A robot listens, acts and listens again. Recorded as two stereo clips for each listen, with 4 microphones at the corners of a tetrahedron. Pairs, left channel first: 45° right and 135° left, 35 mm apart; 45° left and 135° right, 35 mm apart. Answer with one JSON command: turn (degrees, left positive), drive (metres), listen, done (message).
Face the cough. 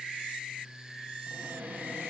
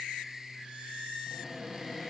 {"listen": true}
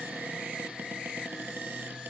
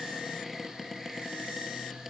{"listen": true}
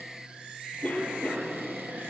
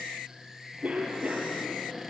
{"turn": -85}
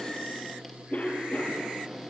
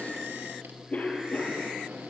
{"done": "Found it: a cough, straight ahead, over 4 m away."}